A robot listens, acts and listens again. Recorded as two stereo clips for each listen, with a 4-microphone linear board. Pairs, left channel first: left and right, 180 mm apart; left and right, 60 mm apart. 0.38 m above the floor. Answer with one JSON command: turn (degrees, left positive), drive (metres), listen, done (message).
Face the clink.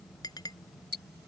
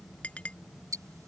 {"turn": 20}
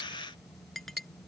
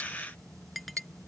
{"done": "Facing the clink."}